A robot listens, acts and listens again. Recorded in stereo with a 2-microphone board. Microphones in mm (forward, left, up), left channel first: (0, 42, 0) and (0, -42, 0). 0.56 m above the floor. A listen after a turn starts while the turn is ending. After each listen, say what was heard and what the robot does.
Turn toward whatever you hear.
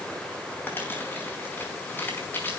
The crumpling: about 25° left or 155° left. Turn 25° left.
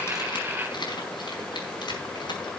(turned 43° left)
So it is at 115° left. Turn 115° left.
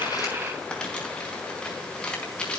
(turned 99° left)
The crumpling is now 15° left. Turn 15° left.
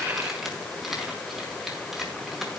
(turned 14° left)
Found it: crumpling, straight ahead.